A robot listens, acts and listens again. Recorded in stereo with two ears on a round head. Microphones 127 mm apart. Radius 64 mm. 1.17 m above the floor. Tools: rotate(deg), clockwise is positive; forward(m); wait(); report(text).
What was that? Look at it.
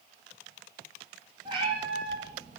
rotate(35)
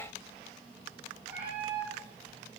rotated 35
rotate(10)
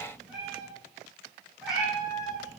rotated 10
report("Found it: a cat meowing, straight ahead, over 4 m away.")